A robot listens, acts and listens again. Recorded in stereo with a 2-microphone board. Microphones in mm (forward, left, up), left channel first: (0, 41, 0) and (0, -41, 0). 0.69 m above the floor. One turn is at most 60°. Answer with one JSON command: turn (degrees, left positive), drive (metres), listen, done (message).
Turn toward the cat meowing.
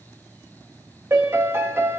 {"listen": true}
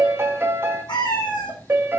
{"turn": 60}
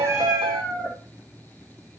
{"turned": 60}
{"done": "Found it: a cat meowing, straight ahead, over 4 m away."}